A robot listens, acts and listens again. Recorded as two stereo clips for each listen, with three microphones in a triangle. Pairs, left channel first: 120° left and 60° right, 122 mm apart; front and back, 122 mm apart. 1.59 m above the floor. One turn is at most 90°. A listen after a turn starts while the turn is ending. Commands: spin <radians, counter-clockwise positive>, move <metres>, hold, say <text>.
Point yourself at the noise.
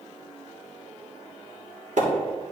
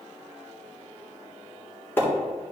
spin -1.31
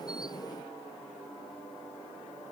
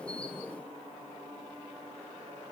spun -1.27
say I heard a splash from this way, but can't make it out now.